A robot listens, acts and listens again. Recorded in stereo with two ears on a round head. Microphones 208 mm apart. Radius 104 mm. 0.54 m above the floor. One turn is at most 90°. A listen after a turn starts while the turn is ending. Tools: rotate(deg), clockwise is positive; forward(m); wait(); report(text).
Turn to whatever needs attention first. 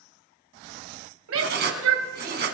rotate(65)
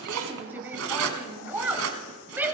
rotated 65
rotate(10)
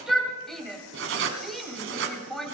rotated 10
report("Found it: a shout, straight ahead, 2 to 4 m away.")